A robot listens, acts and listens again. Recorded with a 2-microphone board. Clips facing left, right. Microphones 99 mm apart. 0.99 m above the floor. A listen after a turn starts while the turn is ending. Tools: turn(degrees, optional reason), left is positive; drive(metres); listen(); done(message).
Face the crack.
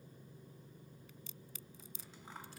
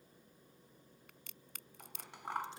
turn(degrees=-65, reason="The crack: about 65° right or 115° right.")
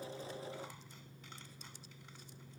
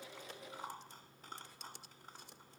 listen()
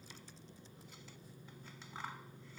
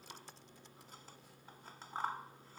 done("I heard a crack, but can't make it out now. It was about straight ahead or 50° right.")